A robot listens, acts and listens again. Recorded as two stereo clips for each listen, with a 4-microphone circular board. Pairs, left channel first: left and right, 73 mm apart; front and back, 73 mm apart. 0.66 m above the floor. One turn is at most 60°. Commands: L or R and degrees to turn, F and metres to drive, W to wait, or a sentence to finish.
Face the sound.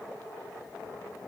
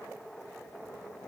W
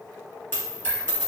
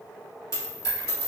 L30
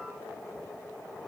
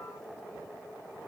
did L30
Facing where the dropped coin came from. I can't hear it now.